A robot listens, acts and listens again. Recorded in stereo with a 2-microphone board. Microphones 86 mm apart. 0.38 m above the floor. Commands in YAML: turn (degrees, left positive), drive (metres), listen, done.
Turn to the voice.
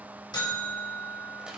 listen: true
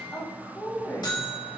turn: 30
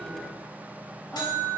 listen: true
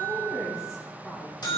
done: "Facing the woman speaking."